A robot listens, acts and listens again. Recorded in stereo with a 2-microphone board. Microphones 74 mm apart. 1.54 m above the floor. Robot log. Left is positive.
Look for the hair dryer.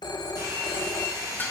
note: The hair dryer: about 50° right or 130° right.
cmd yaw -50
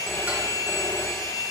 end: Facing the hair dryer.